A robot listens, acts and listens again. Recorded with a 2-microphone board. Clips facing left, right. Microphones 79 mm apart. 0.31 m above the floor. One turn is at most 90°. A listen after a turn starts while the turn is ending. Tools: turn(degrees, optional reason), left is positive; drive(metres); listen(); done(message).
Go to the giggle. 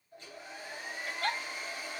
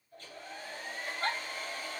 turn(degrees=-35, reason="The giggle: about 35° right or 145° right.")
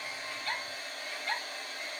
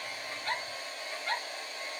drive(metres=1.0)
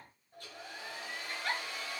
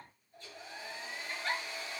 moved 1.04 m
drive(metres=1.0)
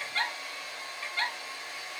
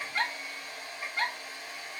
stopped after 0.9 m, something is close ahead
turn(degrees=-10, reason="The giggle is now 10° right.")
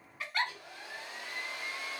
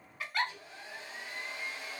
done("I am next to the giggle.")